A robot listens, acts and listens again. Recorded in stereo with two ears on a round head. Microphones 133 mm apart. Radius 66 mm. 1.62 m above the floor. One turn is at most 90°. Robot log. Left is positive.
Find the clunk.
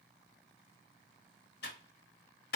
cmd idle
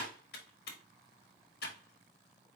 cmd idle
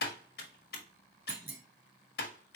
cmd yaw -30
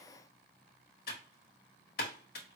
cmd idle
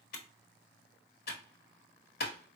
end: I heard a clunk, but can't make it out now. It was about 15° left or 135° right.